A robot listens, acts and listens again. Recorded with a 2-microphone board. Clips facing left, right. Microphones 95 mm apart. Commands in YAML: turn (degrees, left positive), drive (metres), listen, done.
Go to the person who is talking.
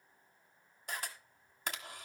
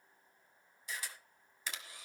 listen: true
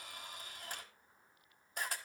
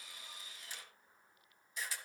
listen: true
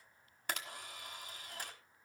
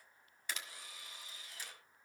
done: "I can't make out anyone speaking, only a camera shutter."